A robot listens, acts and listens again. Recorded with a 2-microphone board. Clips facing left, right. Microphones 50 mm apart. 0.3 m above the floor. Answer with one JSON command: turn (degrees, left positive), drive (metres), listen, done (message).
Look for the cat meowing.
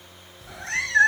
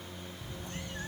{"turn": 90}
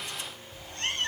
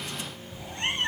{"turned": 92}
{"turn": -20}
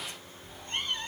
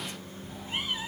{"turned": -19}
{"done": "Found it: a cat meowing, straight ahead."}